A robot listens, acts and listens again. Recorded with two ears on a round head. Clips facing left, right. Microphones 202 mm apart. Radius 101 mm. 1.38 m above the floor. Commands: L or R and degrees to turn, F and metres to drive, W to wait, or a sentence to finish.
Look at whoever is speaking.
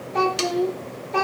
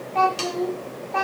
L40
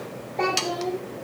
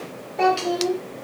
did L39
R10
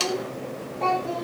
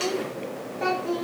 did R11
R15
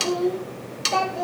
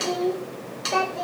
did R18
Found it: a child speaking, straight ahead.